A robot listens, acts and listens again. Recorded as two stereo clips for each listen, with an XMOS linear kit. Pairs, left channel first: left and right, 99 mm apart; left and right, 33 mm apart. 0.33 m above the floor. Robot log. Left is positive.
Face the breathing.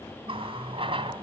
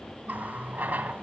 cmd idle
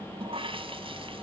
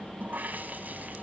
cmd idle
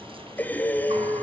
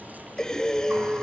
note: The breathing: about 15° left or 165° left.
cmd yaw +15
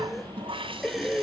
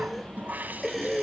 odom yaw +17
end: Facing the breathing.